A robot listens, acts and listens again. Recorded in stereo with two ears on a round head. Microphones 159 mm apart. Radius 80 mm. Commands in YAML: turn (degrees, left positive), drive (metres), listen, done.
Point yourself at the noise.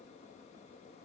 listen: true
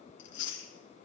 turn: 70
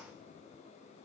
listen: true
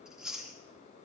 done: "Found it: chewing, straight ahead, 2 to 4 m away."